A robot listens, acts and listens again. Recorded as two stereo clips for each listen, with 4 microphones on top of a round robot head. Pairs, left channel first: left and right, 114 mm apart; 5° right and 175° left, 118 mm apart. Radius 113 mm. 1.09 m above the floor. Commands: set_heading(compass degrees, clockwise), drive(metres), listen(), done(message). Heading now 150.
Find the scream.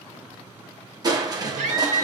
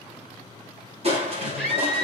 set_heading(250)
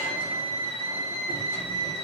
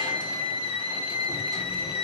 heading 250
set_heading(225)
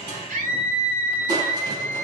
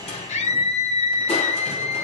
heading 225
set_heading(215)
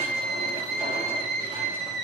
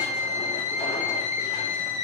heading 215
done("Facing the scream, over 4 m away.")